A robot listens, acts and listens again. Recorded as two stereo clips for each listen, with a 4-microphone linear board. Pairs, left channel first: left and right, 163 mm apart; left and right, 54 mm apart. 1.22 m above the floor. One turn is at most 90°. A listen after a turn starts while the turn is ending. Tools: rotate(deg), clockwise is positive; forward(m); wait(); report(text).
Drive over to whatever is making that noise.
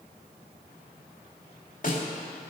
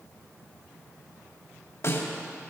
rotate(-55)
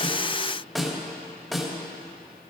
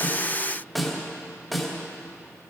forward(1.0)
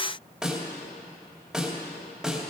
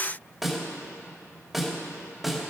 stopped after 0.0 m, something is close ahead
report("Blocked. The snare drum is further on, straight ahead.")